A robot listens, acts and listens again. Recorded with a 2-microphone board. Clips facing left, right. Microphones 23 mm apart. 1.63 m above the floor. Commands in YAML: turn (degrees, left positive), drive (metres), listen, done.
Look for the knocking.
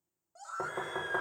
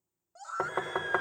turn: -60
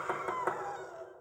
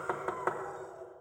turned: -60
turn: -10
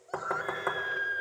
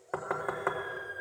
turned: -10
done: "Found it: knocking, straight ahead, 1 to 2 m away."